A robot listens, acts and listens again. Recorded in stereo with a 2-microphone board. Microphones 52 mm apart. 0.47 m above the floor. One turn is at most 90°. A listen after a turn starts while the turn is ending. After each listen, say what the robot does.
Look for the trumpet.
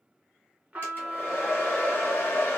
Turn 25° right.
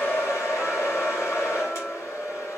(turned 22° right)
Keep listening.
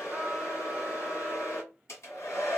Keep listening.
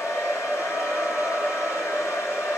I heard a trumpet, but can't make it out now. It was about 5° right or 135° right.